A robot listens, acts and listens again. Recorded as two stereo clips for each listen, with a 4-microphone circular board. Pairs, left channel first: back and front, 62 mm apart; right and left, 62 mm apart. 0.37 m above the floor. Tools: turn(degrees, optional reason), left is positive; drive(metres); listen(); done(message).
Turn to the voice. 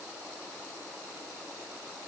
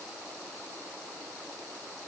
listen()
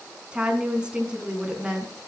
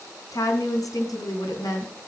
turn(degrees=-75, reason="The woman speaking: 75° right.")
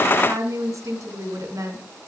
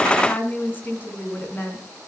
turn(degrees=-30, reason="The woman speaking is now 30° right.")
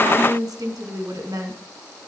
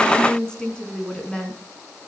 turn(degrees=-15, reason="The woman speaking is now 15° right.")
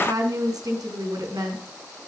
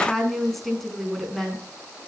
done("Facing the woman speaking, 2 to 4 m away.")